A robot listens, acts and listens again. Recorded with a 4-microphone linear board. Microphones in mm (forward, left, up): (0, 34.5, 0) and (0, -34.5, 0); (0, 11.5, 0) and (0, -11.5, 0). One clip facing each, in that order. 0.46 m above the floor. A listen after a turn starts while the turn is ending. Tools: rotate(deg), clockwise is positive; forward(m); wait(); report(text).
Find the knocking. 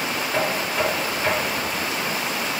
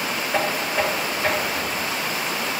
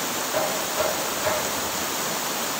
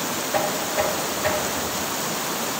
rotate(30)
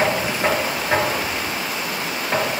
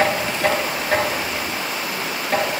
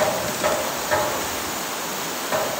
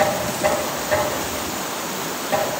rotate(-25)
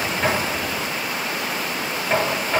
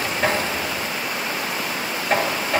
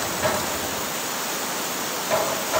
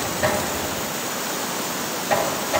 report("Found it: knocking, straight ahead.")